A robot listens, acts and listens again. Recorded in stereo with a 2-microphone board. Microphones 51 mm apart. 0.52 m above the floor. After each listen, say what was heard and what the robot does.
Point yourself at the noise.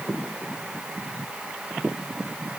Keep listening.
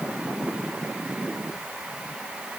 Keep listening.
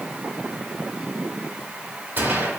The gunshot: about 45° right or 135° right. Turn 45° right.
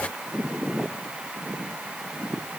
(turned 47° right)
Keep listening.
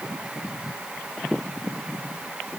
I heard a gunshot, but can't make it out now. It was about 5° left or 90° right.